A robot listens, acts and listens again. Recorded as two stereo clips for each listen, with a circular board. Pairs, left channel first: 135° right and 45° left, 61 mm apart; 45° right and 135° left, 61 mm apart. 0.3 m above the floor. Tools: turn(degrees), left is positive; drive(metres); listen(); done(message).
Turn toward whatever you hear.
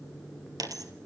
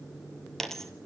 turn(degrees=40)
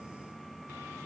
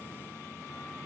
done("Facing where the dropped coin came from. I can't hear it now.")